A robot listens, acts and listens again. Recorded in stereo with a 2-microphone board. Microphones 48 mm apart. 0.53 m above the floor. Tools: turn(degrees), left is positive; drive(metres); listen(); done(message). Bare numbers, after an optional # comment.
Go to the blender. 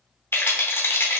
listen()
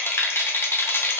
listen()
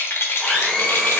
turn(30)
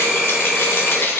# So it is at 20° right.
turn(-20)
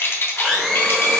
drive(1.0)
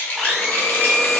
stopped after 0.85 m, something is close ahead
done("Arrived at the blender, straight ahead.")